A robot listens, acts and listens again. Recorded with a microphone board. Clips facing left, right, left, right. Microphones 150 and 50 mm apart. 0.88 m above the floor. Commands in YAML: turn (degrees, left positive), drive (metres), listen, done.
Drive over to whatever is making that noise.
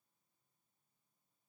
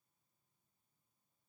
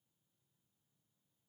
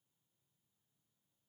listen: true
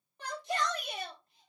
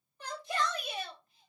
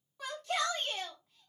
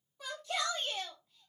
turn: 90
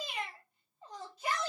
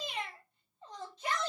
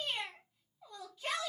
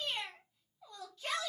turn: 10
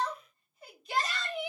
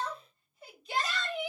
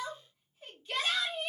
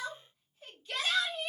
drive: 1.0
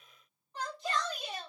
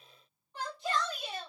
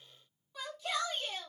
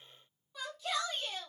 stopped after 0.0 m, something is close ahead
done: "Something is in my way. I am facing the shout but have not reached it."